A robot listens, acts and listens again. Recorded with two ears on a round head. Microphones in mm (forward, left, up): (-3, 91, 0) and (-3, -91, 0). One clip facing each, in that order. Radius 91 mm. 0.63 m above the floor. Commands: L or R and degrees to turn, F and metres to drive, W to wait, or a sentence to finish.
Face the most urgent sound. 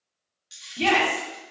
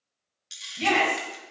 L60
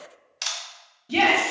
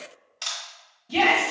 L25
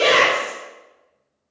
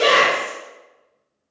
Found it: a shout, straight ahead, 1 to 2 m away.